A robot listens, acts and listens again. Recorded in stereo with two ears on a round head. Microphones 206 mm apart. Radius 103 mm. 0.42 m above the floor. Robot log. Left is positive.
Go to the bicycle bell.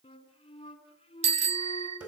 note: The bicycle bell: about 30° right or 150° right.
cmd yaw -30
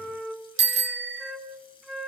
note: So it is at 120° right.
cmd yaw -120
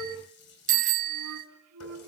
note: The bicycle bell is now 40° right.
cmd yaw -40
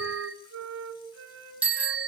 cmd fwd 1.0
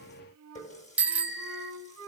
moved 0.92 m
cmd fwd 1.0
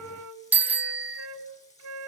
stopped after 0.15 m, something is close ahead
note: The bicycle bell is now 10° right.
cmd yaw -10
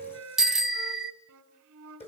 end: I am next to the bicycle bell.